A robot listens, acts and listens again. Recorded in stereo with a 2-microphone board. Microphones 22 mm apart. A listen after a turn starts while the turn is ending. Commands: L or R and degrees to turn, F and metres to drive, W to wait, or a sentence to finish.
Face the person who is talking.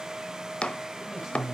R20
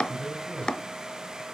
R140
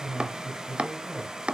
R15
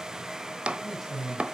Found it: a man speaking, straight ahead.